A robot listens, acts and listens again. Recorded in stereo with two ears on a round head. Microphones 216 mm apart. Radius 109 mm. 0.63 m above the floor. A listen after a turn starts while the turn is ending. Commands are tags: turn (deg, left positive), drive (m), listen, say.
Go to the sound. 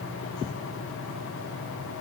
<listen/>
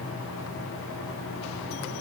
<listen/>
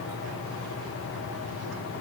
<say>I can't make out anything.</say>